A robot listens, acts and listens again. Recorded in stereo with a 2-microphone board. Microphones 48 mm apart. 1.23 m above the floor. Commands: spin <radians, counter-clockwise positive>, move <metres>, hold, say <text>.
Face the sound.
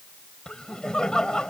spin 0.52
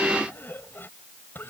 spin 2.36
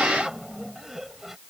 say Found it: laughter, straight ahead.